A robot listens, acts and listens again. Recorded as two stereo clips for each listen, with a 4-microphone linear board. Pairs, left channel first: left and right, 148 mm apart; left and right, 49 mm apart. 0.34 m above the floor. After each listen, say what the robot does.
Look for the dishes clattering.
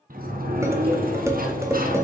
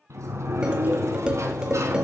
Turn 20° right.
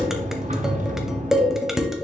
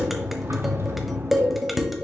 Found it: dishes clattering, straight ahead.